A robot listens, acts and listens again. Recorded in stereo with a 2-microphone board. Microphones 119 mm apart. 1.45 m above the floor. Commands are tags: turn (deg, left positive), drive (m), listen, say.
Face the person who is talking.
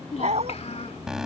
<turn deg="65"/>
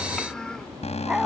<say>Found it: a child speaking, straight ahead.</say>